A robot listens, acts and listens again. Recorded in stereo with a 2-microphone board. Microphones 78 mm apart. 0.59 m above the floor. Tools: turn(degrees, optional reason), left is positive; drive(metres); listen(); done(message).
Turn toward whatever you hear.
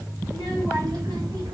turn(degrees=-70, reason="The child speaking: about 70° right or 110° right.")
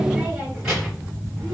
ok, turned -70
done("Found it: a child speaking, straight ahead.")